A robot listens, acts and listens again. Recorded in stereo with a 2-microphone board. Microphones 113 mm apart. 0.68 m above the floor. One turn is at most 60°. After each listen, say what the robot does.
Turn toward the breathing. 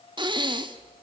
Turn 45° right.
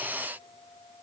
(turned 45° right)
Keep listening.
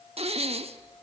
Turn 60° right.
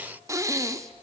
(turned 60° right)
Turn 30° right.
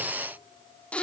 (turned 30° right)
Turn 10° left.
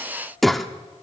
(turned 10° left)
Found it: breathing, straight ahead.